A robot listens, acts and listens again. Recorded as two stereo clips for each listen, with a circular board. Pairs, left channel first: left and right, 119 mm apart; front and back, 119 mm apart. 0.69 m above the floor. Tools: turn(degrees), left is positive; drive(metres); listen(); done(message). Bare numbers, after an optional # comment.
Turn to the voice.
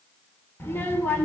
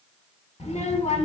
# The child speaking: 20° left.
turn(20)
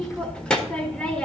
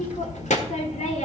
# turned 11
done("Found it: a child speaking, straight ahead.")